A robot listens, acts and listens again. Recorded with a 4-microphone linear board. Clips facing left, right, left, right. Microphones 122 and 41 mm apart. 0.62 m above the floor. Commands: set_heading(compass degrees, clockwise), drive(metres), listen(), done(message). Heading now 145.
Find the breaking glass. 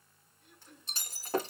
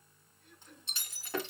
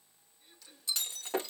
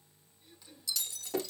set_heading(105)
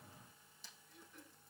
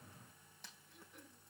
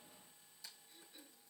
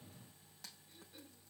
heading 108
listen()
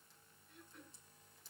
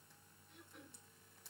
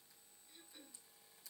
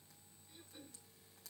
done("I heard breaking glass, but can't make it out now. It was about straight ahead or 105° left.")